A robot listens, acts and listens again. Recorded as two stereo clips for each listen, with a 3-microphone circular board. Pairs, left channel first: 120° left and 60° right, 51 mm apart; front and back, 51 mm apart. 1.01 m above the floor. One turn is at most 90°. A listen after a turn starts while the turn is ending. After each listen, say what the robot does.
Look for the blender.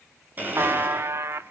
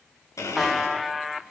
Found it: a blender, straight ahead.